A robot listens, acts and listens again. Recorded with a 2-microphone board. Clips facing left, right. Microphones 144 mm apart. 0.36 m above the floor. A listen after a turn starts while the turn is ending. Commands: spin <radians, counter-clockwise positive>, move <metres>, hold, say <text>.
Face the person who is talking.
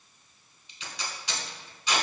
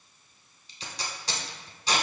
hold
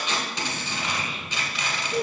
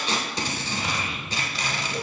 spin 0.70
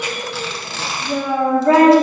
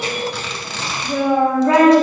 spin 0.79
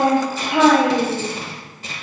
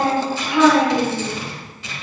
spin 2.01
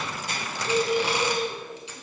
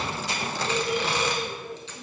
spin -0.26
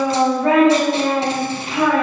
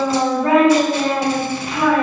say Found it: a child speaking, straight ahead, 1 to 2 m away.